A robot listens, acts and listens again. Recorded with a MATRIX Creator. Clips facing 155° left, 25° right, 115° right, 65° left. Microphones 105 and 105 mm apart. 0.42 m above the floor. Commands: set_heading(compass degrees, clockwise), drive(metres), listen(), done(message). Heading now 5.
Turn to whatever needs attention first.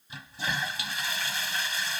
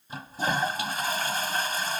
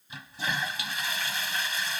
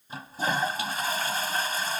listen()
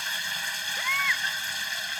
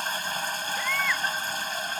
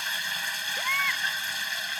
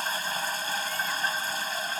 set_heading(115)
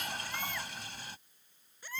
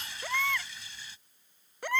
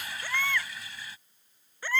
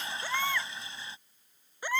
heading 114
done("Facing the baby crying.")